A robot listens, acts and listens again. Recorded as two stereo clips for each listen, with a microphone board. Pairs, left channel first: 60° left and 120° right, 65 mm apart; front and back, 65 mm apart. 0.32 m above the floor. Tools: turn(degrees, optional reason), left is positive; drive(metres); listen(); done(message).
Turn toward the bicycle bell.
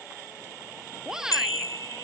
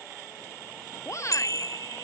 turn(degrees=30, reason="The bicycle bell: 30° left.")
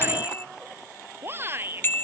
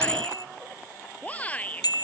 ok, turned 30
done("Found it: a bicycle bell, straight ahead.")